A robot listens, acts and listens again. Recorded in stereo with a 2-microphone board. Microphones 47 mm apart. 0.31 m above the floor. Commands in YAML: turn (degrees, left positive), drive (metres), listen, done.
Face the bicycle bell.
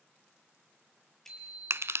turn: 30
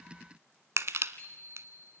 turn: 140
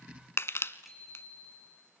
done: "Facing the bicycle bell, over 4 m away."